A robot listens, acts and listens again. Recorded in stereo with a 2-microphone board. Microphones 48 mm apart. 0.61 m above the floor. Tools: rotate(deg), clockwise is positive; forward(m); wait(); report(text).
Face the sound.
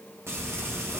rotate(65)
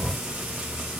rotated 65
rotate(10)
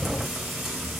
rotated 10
report("Found it: frying, straight ahead, 2 to 4 m away.")